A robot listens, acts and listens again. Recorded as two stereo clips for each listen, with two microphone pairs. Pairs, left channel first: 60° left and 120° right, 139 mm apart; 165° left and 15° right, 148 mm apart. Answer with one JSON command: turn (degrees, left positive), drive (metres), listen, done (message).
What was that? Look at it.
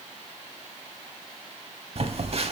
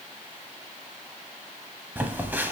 {"turn": -85}
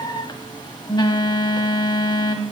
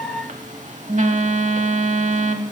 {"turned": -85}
{"done": "Facing the phone buzzing, under 1 m away."}